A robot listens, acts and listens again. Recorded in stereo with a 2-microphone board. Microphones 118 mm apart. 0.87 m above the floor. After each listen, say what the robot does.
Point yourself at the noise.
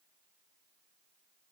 Keep listening.
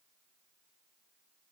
Keep listening.
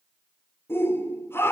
Turn 20° left.
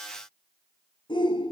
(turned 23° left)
Turn 135° left.
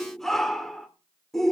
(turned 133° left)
Facing the shout, 2 to 4 m away.